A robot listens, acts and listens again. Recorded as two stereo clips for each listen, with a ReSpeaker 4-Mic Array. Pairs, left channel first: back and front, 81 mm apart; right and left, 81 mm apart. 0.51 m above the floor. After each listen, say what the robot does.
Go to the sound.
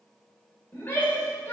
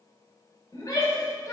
Turn 120° right.
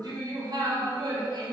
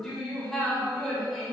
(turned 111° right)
Drive 1.0 m forward.
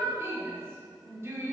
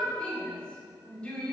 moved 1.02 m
Turn 25° right.
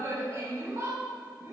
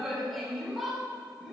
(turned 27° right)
Drive 1.0 m forward.
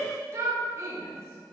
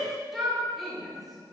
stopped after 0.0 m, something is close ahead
Arrived at the shout, straight ahead.